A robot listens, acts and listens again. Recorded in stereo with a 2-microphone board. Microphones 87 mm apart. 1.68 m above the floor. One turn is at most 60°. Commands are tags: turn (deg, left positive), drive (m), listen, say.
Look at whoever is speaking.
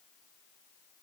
<listen/>
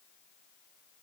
<listen/>
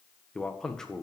<turn deg="30"/>
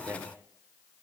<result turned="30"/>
<turn deg="-25"/>
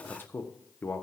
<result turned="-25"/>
<turn deg="25"/>
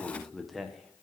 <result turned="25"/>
<say>Facing the man speaking.</say>